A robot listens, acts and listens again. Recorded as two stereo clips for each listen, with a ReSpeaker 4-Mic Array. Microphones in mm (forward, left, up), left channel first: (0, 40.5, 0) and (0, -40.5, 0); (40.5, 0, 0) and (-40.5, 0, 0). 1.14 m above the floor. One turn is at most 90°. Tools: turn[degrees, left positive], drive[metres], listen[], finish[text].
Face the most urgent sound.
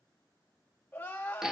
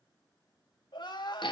Thought: The crying: 25° left.
Action: turn[25]
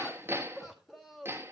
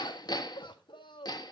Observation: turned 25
Action: finish[Facing the crying, 1 to 2 m away.]